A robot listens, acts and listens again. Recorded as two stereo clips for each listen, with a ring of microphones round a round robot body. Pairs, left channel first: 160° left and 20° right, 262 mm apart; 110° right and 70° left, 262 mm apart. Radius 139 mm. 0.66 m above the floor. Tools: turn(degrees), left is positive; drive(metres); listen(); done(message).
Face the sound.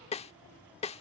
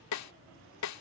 turn(degrees=-135)
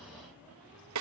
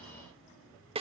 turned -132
done("Facing the snare drum.")